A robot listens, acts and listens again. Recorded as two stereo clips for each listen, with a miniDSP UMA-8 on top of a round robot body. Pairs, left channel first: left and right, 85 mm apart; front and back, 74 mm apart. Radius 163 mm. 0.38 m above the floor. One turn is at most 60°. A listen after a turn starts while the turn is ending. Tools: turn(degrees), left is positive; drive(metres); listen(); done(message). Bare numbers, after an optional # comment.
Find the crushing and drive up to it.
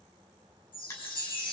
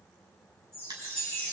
# The crushing: 145° left.
turn(60)
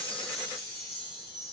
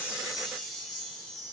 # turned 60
# Nothing new. It was at 85° left.
turn(60)
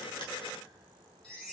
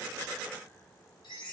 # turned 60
# Nothing new. It was at 25° left.
turn(25)
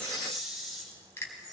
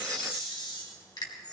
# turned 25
# The crushing is now 30° left.
turn(30)
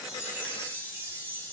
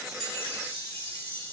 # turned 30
listen()
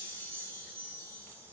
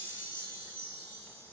listen()
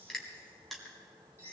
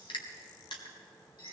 drive(1.0)
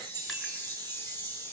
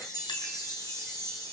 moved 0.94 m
listen()
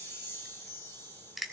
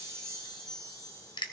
drive(1.0)
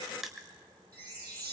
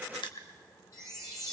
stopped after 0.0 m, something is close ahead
done("I am next to the crushing.")